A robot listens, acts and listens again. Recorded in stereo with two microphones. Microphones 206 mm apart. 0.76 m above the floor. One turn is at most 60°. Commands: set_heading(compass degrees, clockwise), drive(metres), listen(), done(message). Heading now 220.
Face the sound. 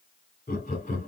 set_heading(180)
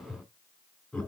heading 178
done("Found it: laughter, straight ahead.")